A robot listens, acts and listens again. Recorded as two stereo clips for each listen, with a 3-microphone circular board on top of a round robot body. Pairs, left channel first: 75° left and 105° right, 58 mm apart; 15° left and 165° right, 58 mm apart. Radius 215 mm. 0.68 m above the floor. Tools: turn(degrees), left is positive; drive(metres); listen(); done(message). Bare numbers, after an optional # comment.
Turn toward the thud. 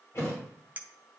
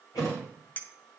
# The thud: 30° left.
turn(30)
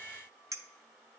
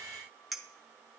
done("I heard a thud from this way, but can't make it out now.")